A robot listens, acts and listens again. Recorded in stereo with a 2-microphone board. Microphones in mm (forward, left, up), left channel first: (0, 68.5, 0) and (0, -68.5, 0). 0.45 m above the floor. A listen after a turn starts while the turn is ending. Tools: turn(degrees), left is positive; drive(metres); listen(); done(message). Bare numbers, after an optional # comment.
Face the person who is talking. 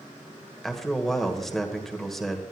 turn(30)
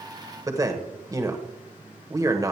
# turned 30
# So it is at 30° right.
turn(-30)
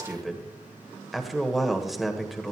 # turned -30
done("Found it: a man speaking, straight ahead.")